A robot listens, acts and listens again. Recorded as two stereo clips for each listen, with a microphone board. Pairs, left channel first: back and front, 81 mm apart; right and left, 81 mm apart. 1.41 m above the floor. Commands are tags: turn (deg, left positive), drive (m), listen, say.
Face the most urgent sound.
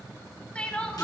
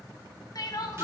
<turn deg="-110"/>
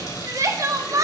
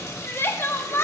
<turn deg="-35"/>
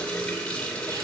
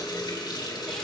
<listen/>
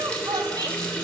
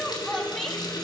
<listen/>
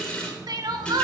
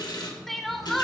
<say>Found it: crying, straight ahead.</say>